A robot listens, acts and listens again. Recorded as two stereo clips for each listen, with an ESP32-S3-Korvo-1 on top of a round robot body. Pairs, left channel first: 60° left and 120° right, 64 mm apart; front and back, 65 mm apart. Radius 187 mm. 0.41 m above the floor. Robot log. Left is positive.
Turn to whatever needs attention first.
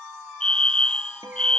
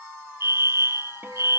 note: The fire alarm: 135° left.
cmd yaw +135
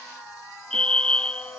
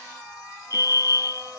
note: The fire alarm is now 15° right.
cmd yaw -15
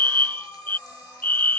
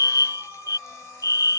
end: Found it: a fire alarm, straight ahead.